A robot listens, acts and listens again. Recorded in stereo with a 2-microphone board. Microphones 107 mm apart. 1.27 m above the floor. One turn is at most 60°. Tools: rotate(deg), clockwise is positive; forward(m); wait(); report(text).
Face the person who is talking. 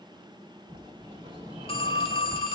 wait()
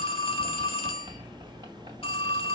wait()
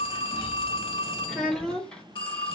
rotate(-30)
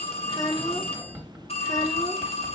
rotate(-60)
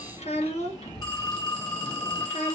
rotate(-60)
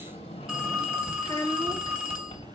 rotate(-40)
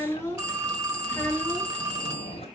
rotate(-20)
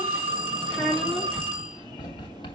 report("Found it: a child speaking, straight ahead.")